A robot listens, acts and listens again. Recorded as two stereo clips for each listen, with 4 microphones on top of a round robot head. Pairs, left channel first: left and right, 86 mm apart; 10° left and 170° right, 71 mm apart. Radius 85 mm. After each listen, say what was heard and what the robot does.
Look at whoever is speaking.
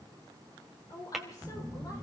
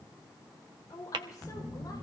The woman speaking: 45° left. Turn 45° left.
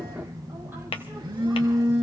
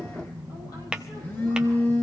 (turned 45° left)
Keep listening.
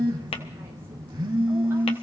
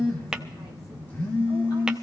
Keep listening.
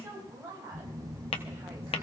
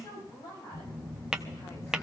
The woman speaking is now 25° right. Turn 25° right.
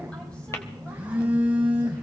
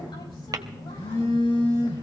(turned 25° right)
Keep listening.
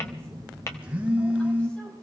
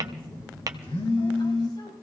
Keep listening.
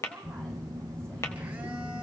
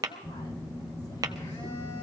Facing where the woman speaking came from. I can't hear it now.